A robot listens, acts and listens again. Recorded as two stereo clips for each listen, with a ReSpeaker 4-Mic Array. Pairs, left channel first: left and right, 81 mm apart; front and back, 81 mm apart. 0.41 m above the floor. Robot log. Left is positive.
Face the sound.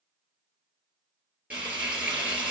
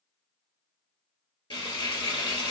note: The frying: 15° right.
cmd yaw -15
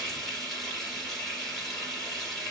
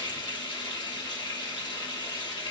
end: Facing the frying.